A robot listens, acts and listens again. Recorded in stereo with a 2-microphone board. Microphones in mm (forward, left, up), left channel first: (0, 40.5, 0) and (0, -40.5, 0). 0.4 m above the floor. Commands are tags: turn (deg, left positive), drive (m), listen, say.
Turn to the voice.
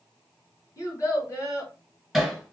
<turn deg="40"/>
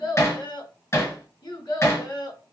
<turn deg="95"/>
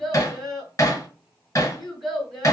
<say>Facing the child speaking.</say>